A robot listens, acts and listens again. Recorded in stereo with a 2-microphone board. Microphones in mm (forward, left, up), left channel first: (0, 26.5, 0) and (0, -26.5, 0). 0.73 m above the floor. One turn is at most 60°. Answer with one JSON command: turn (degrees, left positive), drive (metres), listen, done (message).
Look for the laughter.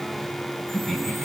{"turn": 30}
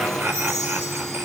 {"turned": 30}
{"turn": -40}
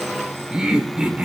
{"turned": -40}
{"turn": -25}
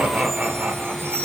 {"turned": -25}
{"turn": -30}
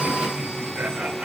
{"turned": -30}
{"turn": -25}
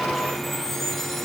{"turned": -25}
{"listen": true}
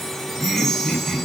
{"done": "Facing the laughter."}